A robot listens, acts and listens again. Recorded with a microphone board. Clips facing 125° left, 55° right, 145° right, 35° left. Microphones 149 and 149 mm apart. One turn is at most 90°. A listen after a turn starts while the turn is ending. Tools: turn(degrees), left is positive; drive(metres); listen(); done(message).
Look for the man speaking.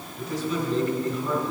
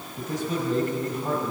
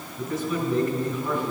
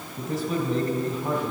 turn(degrees=-15)
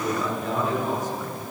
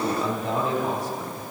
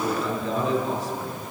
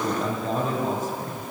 done("Facing the man speaking, 2 to 4 m away.")